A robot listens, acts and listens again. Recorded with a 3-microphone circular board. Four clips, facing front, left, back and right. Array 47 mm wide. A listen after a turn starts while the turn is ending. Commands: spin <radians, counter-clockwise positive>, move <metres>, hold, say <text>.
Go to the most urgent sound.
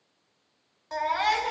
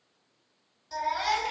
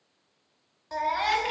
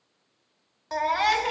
spin -1.40
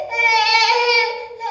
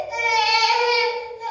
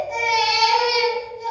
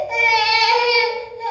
spin -0.44
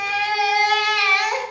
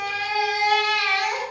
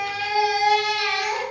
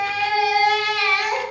spin -0.35
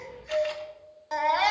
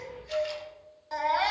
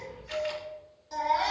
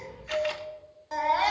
move 1.0
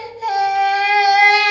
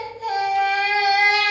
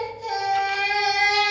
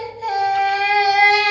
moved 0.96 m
spin -0.26
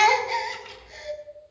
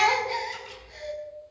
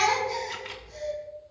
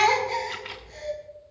move 1.0
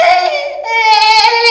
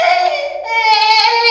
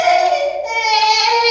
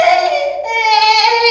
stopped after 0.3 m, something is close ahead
say I am next to the baby crying.